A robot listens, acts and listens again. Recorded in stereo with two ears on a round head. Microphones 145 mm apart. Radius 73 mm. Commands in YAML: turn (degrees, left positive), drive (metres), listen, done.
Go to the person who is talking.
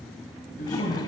turn: 55
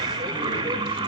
listen: true
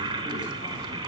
listen: true
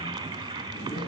done: "I heard a man speaking, but can't make it out now. It was about straight ahead or 70° left. I did not reach it."